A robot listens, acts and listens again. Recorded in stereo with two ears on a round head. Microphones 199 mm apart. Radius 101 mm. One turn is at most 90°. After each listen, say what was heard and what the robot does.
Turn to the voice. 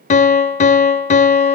Keep listening.
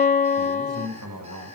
Turn 90° right.
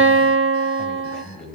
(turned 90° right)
Found it: a man speaking, straight ahead.